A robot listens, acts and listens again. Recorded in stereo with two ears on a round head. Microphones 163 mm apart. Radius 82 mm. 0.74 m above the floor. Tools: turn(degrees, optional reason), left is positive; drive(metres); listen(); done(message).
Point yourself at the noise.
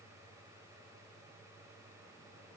listen()
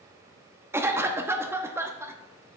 turn(degrees=-30)
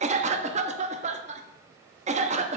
turn(degrees=-135, reason="So it is at 135° right.")
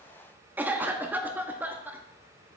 turn(degrees=-10, reason="The cough is now 10° right.")
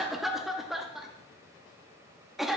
done("Found it: a cough, straight ahead.")